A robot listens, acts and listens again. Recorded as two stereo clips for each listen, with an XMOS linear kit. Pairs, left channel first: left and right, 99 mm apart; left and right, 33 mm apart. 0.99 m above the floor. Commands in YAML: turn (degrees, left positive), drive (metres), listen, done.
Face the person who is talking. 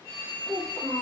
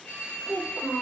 turn: 75
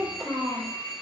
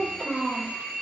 done: "Facing the child speaking."